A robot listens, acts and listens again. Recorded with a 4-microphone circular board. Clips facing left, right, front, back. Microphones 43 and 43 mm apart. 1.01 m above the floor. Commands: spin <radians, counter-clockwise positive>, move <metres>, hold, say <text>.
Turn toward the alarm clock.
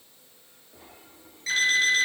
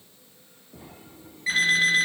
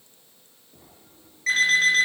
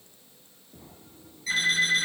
spin -0.35
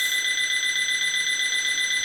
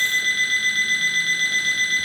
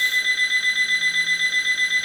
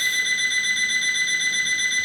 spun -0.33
say Found it: an alarm clock, straight ahead.